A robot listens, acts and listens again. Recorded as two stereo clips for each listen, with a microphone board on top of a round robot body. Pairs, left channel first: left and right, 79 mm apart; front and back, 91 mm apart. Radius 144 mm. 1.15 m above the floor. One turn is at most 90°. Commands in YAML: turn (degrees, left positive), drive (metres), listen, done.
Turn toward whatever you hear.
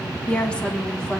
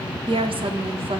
turn: 90
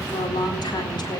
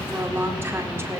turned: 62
turn: 90
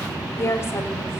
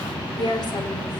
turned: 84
turn: 35
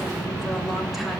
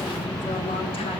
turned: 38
listen: true
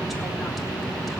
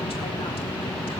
listen: true
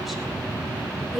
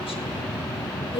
done: "Found it: a woman speaking, straight ahead, over 4 m away."